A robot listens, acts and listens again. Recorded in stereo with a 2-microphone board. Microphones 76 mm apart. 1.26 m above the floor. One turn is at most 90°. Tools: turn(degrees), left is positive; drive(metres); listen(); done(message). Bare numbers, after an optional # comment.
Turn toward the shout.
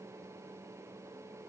listen()
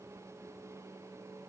listen()
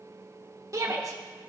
# The shout: about 45° right or 135° right.
turn(-45)
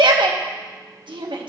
# So it is at 95° right.
turn(-90)
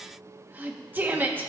# The shout is now 25° right.
turn(-25)
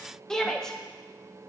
done("Facing the shout.")